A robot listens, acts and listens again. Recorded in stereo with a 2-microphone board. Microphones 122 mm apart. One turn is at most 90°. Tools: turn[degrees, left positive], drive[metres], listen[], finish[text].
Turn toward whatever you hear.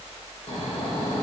Thought: The snoring: about 55° left or 125° left.
Action: turn[55]
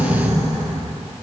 Thought: So it is at 60° left.
Action: turn[60]
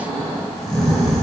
Action: finish[Found it: snoring, straight ahead.]